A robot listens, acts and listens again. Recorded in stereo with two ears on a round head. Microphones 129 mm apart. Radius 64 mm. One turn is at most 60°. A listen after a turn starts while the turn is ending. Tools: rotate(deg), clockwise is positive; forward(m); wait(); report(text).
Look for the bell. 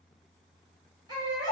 wait()
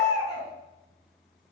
wait()
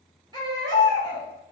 report("I can't make out a bell, only a baby crying.")